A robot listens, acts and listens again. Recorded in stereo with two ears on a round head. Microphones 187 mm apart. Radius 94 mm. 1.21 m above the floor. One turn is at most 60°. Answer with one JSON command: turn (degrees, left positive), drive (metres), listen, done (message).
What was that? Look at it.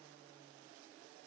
{"listen": true}
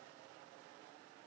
{"listen": true}
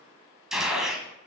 {"turn": 30}
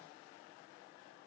{"listen": true}
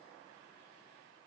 {"done": "I heard a gunshot, but can't make it out now. It was about 30° right or 150° left."}